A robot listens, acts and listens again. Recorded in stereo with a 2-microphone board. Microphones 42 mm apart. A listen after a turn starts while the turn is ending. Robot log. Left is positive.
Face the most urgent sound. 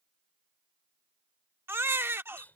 note: The baby crying: about 75° right or 105° right.
cmd yaw -75
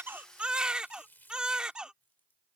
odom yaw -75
note: So it is at 25° right.
cmd yaw -25
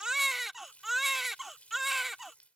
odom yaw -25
end: Found it: a baby crying, straight ahead.